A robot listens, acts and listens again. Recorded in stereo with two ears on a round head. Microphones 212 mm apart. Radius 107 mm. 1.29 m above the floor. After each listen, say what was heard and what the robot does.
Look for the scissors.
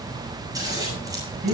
The scissors: about 15° right or 165° right. Turn 15° right.
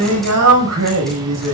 Keep listening.
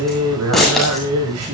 Found it: scissors, straight ahead.